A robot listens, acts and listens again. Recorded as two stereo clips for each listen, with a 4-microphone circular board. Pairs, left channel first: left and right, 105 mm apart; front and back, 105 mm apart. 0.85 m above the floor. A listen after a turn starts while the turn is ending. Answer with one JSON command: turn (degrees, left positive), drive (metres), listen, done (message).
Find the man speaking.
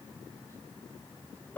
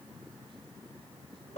{"listen": true}
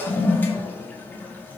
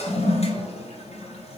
{"listen": true}
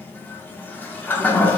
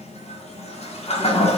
{"done": "I can't make out a man speaking to turn to."}